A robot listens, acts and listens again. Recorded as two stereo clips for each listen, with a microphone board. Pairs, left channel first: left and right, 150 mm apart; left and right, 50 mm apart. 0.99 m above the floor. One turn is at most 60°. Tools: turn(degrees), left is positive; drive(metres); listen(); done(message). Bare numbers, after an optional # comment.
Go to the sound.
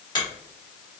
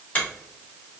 # The finger snap: about 30° left or 150° left.
turn(30)
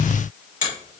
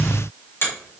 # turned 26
# So it is at 120° left.
turn(60)
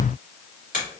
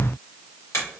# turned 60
# The finger snap is now 60° left.
turn(60)
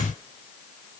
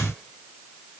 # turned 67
listen()
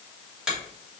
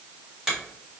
drive(1.0)
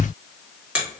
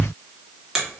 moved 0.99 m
# The finger snap is now 10° right.
turn(-10)
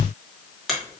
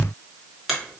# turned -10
drive(1.0)
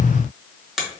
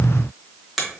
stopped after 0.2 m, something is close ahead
done("I am next to the finger snap.")